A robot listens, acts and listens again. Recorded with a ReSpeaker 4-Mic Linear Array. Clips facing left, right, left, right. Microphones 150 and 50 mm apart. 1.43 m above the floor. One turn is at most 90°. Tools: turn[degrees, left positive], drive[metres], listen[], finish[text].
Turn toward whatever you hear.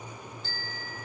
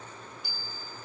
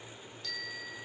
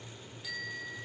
Action: turn[-30]
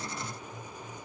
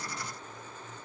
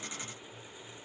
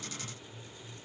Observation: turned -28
Action: listen[]
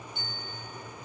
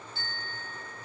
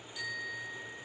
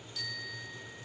Thought: So it is at 15° left.
Action: turn[15]
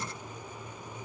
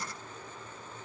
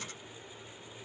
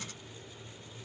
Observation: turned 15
Action: listen[]
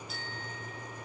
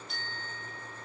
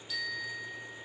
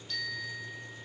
Action: finish[Facing the bicycle bell.]